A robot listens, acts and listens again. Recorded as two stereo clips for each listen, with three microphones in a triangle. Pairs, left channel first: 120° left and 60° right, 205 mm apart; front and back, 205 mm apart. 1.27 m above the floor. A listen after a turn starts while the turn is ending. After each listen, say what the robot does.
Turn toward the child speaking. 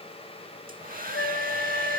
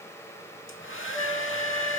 Keep listening.
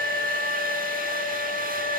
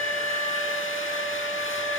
Keep listening.
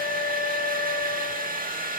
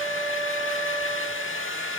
I can't make out a child speaking to turn to.